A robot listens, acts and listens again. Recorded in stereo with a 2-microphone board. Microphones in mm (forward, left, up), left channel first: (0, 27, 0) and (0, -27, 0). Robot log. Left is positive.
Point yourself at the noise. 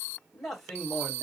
cmd yaw +30
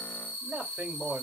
note: So it is at 30° right.
cmd yaw -30
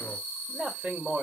note: The man speaking is now 25° right.
cmd yaw -25
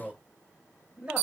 note: The man speaking is now 20° right.
cmd yaw -20
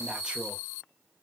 cmd idle
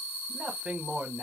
note: The man speaking is now 20° right.
cmd yaw -20
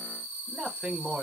note: The man speaking is now 10° right.
cmd yaw -10
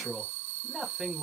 note: The man speaking is now 10° right.
cmd yaw -10
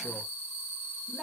cmd idle
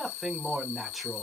end: Found it: a man speaking, straight ahead, 1 to 2 m away.